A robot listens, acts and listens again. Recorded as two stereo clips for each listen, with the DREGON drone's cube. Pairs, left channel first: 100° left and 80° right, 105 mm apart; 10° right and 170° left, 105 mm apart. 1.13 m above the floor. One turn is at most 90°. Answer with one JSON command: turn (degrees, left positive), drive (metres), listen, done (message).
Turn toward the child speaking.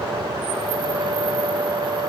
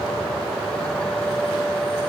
{"listen": true}
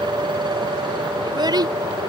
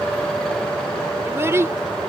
{"turn": -90}
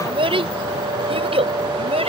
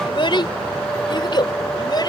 {"turn": -60}
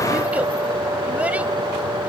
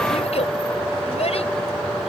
{"listen": true}
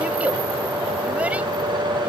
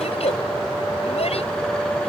{"listen": true}
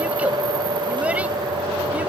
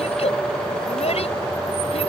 {"done": "Facing where the child speaking came from. I can't hear it now."}